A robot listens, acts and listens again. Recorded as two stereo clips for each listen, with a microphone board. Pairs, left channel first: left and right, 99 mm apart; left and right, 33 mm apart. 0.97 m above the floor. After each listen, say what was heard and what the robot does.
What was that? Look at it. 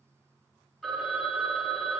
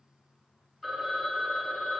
Turn 30° left.
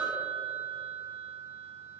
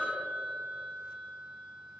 So it is at 30° right. Turn 30° right.
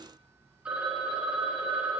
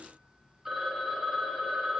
The phone ringing is now 10° right. Turn 10° right.
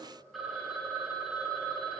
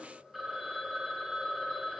Found it: a phone ringing, straight ahead, 2 to 4 m away.